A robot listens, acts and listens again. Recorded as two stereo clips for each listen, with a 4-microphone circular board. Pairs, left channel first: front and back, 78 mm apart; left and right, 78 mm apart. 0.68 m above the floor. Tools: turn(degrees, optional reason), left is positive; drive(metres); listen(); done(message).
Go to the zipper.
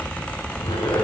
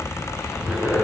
turn(degrees=-10, reason="The zipper: 10° right.")
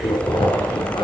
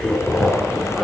drive(metres=1.0)
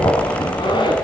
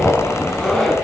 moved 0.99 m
drive(metres=1.0)
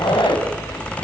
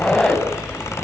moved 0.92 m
turn(degrees=10, reason="The zipper is now 10° left.")
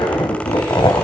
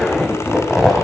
drive(metres=1.0)
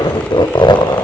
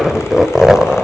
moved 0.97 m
drive(metres=1.0)
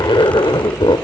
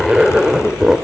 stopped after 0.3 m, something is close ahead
done("I am next to the zipper.")